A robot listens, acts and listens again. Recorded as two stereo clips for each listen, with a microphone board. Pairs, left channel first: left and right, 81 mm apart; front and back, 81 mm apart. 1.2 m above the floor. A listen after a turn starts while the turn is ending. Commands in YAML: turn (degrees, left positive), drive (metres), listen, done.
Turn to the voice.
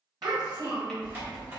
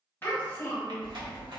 turn: -65
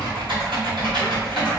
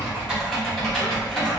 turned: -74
turn: 10
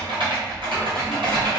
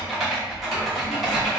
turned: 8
listen: true
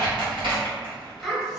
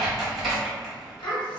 done: "Facing the child speaking, 1 to 2 m away."